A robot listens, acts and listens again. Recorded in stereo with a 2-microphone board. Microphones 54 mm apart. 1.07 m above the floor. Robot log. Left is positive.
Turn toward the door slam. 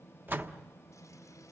note: The door slam: about 40° right or 140° right.
cmd yaw -40
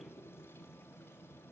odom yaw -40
cmd idle
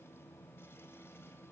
end: I heard a door slam, but can't make it out now. It was about straight ahead or 100° right.